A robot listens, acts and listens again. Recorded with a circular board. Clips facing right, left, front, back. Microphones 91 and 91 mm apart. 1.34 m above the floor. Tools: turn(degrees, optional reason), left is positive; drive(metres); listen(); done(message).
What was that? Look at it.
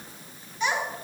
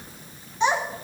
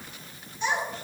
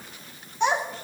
turn(degrees=150, reason="The child speaking: 150° left.")
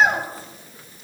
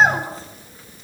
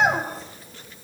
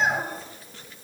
turn(degrees=25, reason="The child speaking is now 25° left.")
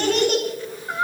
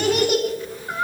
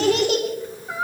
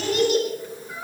done("Facing the child speaking.")